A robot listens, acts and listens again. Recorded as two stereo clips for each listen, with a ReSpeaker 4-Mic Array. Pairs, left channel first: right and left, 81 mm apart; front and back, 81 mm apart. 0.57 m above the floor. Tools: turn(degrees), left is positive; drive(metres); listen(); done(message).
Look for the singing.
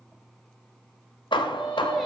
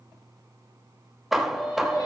done("Facing the singing, 2 to 4 m away.")